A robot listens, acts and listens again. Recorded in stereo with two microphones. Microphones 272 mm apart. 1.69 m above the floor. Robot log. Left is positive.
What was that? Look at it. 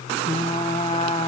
note: The frying: about 20° left or 160° left.
cmd yaw +20
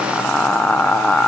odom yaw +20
end: Facing the frying, under 1 m away.